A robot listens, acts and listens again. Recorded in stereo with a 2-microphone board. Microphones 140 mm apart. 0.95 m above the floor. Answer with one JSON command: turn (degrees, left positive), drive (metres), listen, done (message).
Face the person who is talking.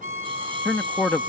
{"turn": 30}
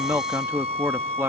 {"turn": -20}
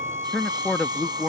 {"done": "Found it: a man speaking, straight ahead."}